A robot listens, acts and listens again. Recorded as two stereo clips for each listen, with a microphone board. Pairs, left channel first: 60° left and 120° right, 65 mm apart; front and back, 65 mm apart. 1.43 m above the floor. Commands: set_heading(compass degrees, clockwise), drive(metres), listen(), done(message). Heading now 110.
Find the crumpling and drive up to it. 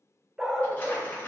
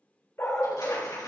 drive(1.0)
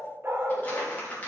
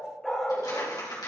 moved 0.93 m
drive(1.0)
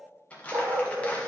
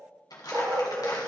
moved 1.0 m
set_heading(120)
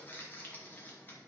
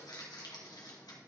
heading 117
drive(1.0)
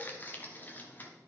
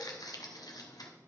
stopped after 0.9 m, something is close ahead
done("Arrived at the crumpling, straight ahead.")